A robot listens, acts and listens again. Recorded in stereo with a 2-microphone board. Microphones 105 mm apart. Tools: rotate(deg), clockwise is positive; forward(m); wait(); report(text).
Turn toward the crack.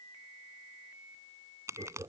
rotate(30)
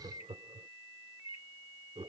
wait()
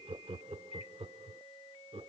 report("I heard a crack, but can't make it out now. It was about straight ahead or 120° right.")